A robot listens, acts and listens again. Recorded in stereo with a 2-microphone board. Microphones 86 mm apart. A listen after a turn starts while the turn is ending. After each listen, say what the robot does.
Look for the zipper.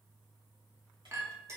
Keep listening.
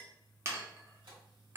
Keep listening.
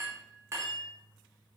I can't make out a zipper to turn to.